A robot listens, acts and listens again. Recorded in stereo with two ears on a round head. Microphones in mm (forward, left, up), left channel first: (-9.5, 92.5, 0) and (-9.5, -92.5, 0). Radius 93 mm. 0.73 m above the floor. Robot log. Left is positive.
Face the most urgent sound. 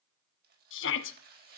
note: The shout: about 65° left or 115° left.
cmd yaw +65
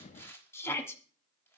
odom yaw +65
note: So it is at 15° left.
cmd yaw +15
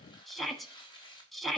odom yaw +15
end: Facing the shout, 1 to 2 m away.